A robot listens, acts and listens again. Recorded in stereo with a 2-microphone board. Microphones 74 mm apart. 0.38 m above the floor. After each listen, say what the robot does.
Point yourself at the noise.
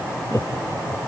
Turn 45° left.
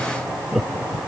Facing the laughter.